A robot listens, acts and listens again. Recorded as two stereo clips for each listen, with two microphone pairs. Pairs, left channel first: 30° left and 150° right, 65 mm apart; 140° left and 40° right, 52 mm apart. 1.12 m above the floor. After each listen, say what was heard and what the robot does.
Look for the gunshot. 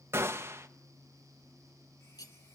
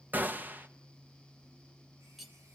The gunshot: 100° right. Turn 100° right.
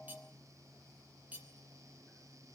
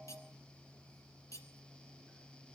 Facing where the gunshot came from. I can't hear it now.